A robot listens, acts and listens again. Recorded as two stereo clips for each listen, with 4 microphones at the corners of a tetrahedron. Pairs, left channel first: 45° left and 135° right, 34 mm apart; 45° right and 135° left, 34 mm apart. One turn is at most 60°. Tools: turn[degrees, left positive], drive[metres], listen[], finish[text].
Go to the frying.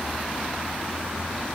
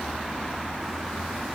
Action: listen[]
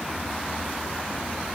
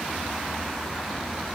Action: listen[]
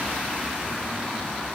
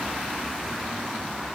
Action: finish[I can't make out frying to turn to.]